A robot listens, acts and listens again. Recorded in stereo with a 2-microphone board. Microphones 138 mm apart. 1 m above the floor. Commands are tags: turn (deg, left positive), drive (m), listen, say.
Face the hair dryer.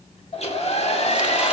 <turn deg="50"/>
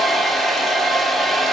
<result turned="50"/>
<say>Facing the hair dryer.</say>